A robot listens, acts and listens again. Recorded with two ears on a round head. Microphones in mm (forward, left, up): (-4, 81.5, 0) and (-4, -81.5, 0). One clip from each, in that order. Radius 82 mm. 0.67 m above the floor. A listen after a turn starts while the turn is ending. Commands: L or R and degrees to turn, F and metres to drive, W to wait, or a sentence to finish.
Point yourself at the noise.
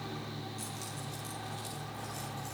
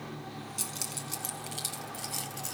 R90
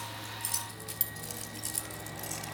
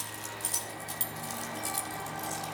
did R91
Found it: keys jangling, straight ahead.